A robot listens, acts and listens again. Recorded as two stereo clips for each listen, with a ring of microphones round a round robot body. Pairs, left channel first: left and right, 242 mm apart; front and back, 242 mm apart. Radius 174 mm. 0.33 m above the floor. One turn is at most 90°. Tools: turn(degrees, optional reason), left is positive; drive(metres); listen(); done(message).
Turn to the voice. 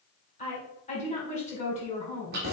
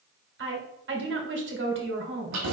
turn(degrees=90, reason="The woman speaking: 155° left.")
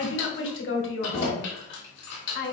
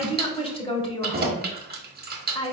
turn(degrees=65, reason="The woman speaking is now 65° left.")
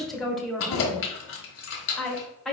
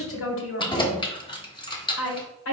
done("Found it: a woman speaking, straight ahead.")